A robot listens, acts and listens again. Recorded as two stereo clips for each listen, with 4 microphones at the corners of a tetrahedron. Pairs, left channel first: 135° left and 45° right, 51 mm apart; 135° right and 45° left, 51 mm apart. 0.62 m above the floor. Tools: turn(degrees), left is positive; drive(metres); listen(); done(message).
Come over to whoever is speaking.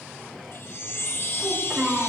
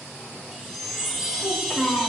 turn(degrees=-100)
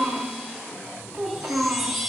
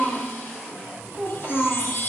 drive(metres=1.0)
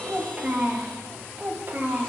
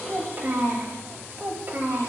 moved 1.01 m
drive(metres=1.0)
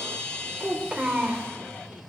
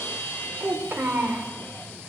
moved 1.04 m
turn(degrees=15)
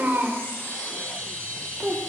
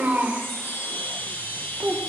drive(metres=1.0)
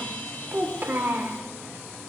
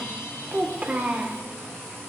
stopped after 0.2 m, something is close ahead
done("I am next to the child speaking.")